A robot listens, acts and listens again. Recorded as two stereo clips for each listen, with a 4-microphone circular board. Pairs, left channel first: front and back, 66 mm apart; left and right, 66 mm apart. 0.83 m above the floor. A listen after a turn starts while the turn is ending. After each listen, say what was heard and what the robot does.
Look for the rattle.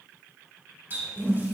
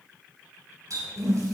Keep listening.
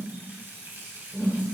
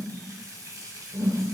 Keep listening.
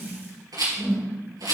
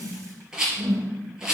The rattle: 170° right. Turn 170° right.
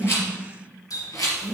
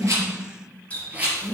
The rattle is now 25° right. Turn 25° right.
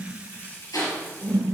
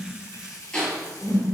The rattle is now 10° left. Turn 10° left.
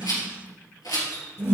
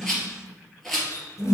Facing the rattle.